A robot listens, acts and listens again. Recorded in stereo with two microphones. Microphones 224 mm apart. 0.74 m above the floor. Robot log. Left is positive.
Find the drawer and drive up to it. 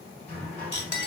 cmd yaw +30
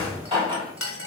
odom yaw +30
note: So it is at 25° right.
cmd yaw -25
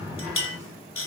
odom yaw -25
note: The drawer is now 15° right.
cmd yaw -15
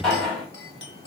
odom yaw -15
cmd fwd 1.0
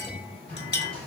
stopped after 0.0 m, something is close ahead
end: Something is in my way. I am facing the drawer but have not reached it.